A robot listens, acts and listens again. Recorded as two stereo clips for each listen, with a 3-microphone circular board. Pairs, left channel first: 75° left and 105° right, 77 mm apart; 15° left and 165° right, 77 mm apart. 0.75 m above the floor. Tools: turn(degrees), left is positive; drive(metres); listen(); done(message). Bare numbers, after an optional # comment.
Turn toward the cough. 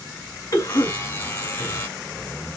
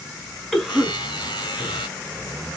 # The cough: 105° left.
turn(105)
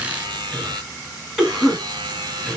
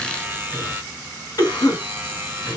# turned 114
# The cough is now 10° right.
turn(-10)
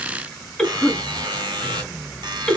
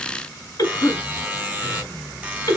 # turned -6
done("Found it: a cough, straight ahead, 2 to 4 m away.")